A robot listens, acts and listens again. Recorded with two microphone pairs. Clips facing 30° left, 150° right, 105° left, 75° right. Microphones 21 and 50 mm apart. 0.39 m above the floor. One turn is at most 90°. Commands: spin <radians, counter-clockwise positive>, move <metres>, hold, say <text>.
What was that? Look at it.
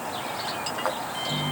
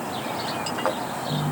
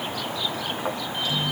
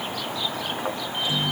say Found it: a microwave, straight ahead.